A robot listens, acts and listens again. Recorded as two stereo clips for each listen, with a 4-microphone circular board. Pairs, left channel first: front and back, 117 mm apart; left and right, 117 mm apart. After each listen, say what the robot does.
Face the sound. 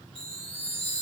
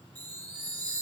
Turn 30° right.
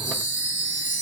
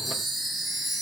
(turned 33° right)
Facing the chime.